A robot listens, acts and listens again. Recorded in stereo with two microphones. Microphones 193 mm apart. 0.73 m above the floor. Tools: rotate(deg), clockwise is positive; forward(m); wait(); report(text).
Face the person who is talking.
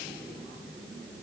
wait()
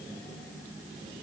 wait()
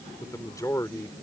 rotate(-15)
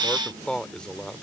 report("Facing the man speaking.")